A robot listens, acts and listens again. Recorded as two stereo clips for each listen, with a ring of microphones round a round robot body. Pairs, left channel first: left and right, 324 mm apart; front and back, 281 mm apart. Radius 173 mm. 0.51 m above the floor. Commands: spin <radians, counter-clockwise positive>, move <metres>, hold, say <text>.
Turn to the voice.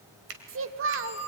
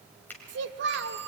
spin -2.36
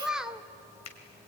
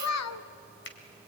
say Facing the child speaking, 1 to 2 m away.